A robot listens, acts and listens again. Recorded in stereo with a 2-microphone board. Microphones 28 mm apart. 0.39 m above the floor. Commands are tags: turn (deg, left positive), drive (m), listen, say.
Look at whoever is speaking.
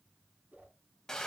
<listen/>
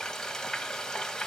<listen/>
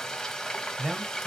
<turn deg="-45"/>
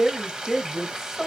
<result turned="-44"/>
<turn deg="-15"/>
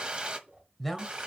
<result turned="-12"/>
<say>Facing the man speaking, 1 to 2 m away.</say>